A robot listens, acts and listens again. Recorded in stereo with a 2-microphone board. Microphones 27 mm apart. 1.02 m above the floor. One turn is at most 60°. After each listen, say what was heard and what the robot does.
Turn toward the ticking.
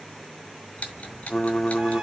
Turn 60° left.
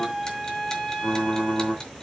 Nothing new. It was at 30° left. Turn 30° left.
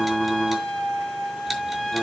Keep listening.
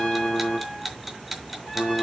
Found it: ticking, straight ahead.